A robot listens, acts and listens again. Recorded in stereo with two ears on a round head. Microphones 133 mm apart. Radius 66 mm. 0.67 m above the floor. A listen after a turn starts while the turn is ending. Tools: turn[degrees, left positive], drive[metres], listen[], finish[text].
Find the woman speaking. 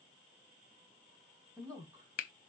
Thought: The woman speaking: about 25° right or 155° right.
Action: turn[-25]
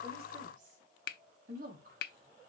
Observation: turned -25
Thought: So it is at 120° right.
Action: turn[-120]
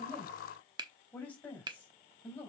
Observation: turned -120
Thought: The woman speaking is now 10° left.
Action: turn[10]
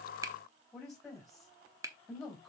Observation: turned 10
Action: finish[Facing the woman speaking, over 4 m away.]